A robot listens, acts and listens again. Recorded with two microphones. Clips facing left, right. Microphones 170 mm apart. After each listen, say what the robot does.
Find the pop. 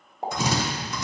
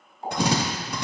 Turn 60° left.
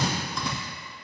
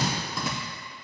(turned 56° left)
Keep listening.
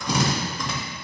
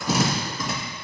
I heard a pop, but can't make it out now. It was about 5° left or 65° left.